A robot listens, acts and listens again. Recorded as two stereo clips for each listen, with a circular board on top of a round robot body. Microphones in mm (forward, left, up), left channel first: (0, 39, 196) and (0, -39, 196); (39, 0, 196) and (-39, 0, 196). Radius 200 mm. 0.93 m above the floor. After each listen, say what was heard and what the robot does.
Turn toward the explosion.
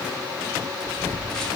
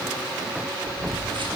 The explosion: 145° right. Turn 145° right.
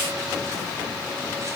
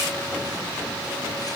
I heard an explosion from this way, but can't make it out now.